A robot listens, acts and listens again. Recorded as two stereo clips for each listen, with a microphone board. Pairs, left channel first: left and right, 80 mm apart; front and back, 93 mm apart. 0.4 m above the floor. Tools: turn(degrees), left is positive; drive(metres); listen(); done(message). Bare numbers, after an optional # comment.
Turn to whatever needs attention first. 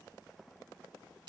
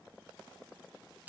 listen()
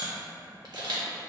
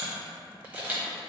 listen()
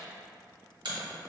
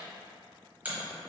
done("I can't make out anything urgent, only a camera shutter.")